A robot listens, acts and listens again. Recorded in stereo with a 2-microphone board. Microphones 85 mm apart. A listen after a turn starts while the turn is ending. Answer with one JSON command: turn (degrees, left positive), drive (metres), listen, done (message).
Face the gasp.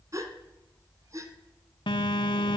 {"turn": -40}
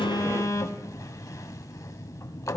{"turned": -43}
{"listen": true}
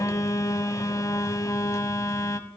{"done": "I heard a gasp, but can't make it out now. It was about 5° left or 100° right."}